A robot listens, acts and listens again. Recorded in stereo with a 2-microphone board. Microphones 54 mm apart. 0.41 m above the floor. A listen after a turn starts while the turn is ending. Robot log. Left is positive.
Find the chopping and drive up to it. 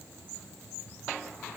cmd idle
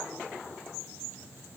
cmd idle
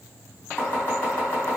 note: The chopping: about 30° left or 150° left.
cmd yaw +30
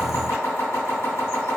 note: So it is at 120° left.
cmd yaw +120
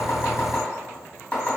note: The chopping is now 35° left.
cmd yaw +35
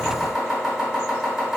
note: The chopping is now 15° right.
cmd yaw -15
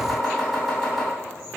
cmd fwd 1.0
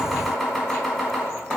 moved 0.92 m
cmd fwd 1.0
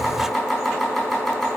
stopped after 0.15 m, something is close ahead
end: Arrived at the chopping, straight ahead.